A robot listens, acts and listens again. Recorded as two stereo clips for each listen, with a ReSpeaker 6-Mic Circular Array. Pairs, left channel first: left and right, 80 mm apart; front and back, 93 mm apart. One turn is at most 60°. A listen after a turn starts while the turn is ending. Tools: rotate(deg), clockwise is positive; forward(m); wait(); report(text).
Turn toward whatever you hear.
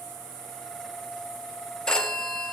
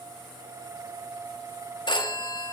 rotate(-10)
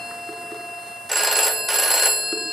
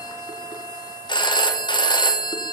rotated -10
report("Found it: a phone ringing, straight ahead, under 1 m away.")